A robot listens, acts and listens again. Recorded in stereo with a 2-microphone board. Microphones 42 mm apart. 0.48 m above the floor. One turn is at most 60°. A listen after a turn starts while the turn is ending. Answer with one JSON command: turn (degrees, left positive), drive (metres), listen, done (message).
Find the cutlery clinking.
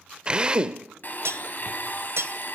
{"turn": -60}
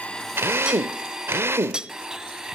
{"turn": -20}
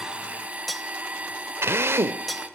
{"done": "Found it: cutlery clinking, straight ahead, 1 to 2 m away."}